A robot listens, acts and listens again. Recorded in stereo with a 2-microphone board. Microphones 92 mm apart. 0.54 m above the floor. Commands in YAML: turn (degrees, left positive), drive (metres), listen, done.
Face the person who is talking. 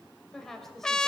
turn: 30
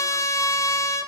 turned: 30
listen: true
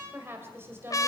turn: -30
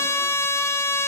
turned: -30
listen: true
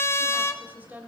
turn: -20
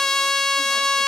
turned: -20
listen: true
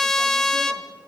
listen: true
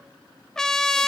done: "I heard a woman speaking from this way, but can't make it out now."